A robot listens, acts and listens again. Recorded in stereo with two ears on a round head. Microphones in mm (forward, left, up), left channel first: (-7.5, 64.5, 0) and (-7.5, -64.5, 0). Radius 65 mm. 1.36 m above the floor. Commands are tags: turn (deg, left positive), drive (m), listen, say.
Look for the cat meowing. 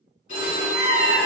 <turn deg="55"/>
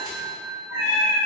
<turn deg="55"/>
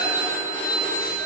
<listen/>
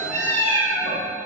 <turn deg="20"/>
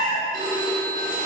<say>Facing the cat meowing, 1 to 2 m away.</say>